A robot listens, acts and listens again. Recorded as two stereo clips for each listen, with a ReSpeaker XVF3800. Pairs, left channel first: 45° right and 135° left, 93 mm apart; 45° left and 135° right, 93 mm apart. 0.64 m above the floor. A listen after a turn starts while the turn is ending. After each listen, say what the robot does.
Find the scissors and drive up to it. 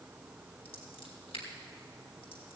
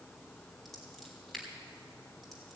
Turn 45° right.
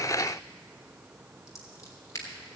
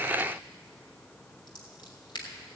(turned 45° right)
Turn 10° left.
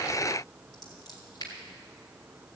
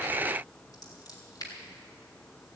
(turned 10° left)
Drive 1.0 m forward.
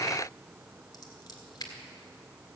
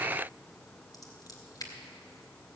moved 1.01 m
Drive 1.0 m forward.
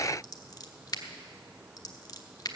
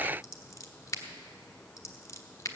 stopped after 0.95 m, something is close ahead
I am next to the scissors.